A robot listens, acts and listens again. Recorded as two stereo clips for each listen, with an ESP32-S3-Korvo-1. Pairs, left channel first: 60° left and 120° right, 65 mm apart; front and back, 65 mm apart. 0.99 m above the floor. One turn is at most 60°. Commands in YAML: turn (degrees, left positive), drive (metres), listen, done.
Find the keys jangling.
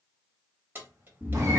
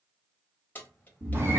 turn: -60
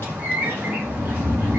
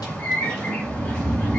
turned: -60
listen: true
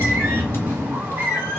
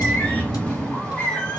listen: true
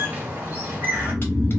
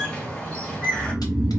done: "I heard keys jangling from this way, but can't make it out now."